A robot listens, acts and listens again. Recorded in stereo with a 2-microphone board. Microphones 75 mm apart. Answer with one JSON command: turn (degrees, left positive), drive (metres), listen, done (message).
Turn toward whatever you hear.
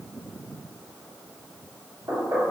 {"turn": -65}
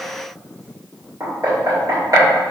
{"turn": -50}
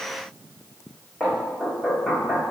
{"done": "Found it: knocking, straight ahead."}